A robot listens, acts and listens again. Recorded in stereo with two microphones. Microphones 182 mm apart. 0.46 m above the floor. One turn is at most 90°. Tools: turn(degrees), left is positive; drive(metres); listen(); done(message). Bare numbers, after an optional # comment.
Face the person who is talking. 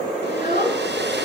# The child speaking: about 50° left or 130° left.
turn(50)
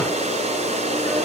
listen()
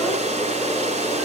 listen()
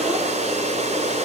done("I heard a child speaking, but can't make it out now. It was about straight ahead or 80° left.")